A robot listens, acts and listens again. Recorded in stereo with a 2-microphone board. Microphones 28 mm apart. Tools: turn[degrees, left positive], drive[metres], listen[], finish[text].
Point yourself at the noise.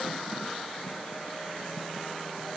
Action: listen[]
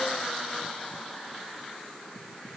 Action: listen[]
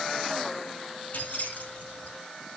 Thought: The keys jangling: about 55° left or 125° left.
Action: turn[55]
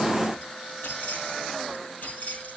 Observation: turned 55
Thought: So it is at 70° left.
Action: turn[70]
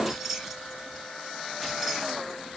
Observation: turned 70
Action: finish[Found it: keys jangling, straight ahead, over 4 m away.]